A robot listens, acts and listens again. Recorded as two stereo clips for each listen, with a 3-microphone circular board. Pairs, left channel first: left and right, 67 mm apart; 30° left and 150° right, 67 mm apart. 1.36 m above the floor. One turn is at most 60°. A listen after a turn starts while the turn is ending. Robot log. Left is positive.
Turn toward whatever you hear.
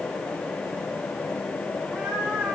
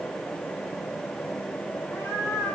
note: The cat meowing: 20° right.
cmd yaw -20
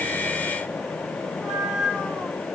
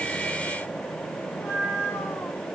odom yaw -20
note: The cat meowing is now 15° right.
cmd yaw -15
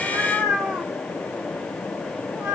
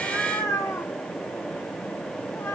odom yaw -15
note: The cat meowing is now 20° right.
cmd yaw -20
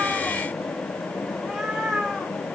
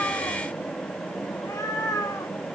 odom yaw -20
end: Found it: a cat meowing, straight ahead.